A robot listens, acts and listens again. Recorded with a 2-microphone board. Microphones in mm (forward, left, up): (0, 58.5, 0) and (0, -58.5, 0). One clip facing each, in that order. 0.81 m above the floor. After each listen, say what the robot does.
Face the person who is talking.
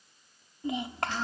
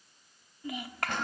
Turn 25° left.
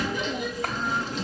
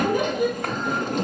Keep listening.
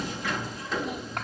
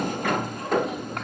Keep listening.
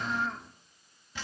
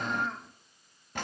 Facing the child speaking.